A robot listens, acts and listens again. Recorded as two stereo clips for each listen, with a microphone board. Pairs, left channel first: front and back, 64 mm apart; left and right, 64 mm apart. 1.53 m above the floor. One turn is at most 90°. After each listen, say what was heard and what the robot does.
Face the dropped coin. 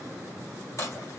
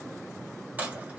The dropped coin: 30° right. Turn 30° right.
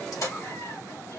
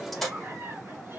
Facing the dropped coin, 1 to 2 m away.